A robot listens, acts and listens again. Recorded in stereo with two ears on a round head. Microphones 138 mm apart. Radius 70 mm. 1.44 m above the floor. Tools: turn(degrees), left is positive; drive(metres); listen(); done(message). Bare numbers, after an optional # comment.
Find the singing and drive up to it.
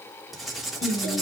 # The singing: about 45° left or 135° left.
turn(45)
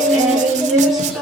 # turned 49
drive(1.0)
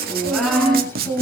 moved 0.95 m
drive(1.0)
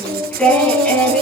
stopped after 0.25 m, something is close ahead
done("Blocked. The singing is further on, straight ahead.")